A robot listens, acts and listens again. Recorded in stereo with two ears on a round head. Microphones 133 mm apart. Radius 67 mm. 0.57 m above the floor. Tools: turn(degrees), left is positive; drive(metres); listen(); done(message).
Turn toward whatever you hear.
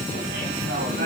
turn(degrees=-75)
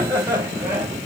turn(degrees=-20)
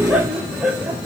turn(degrees=-10)
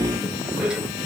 done("Found it: laughter, straight ahead, 2 to 4 m away.")